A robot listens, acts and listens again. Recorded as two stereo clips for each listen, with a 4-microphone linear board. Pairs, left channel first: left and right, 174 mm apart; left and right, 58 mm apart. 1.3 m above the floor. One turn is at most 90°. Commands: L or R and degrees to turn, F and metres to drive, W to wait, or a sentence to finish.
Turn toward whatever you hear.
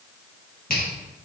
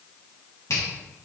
L60
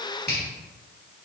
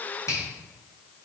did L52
L70
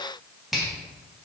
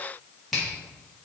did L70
Found it: a finger snap, straight ahead.